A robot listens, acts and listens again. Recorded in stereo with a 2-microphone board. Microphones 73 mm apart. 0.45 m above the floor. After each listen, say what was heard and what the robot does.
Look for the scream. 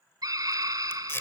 The scream: about 60° right or 120° right. Turn 60° right.
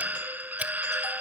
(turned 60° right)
So it is at 30° right. Turn 30° right.
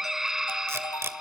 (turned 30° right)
The scream is now 10° right. Turn 10° right.
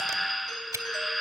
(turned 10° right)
Found it: a scream, straight ahead, 1 to 2 m away.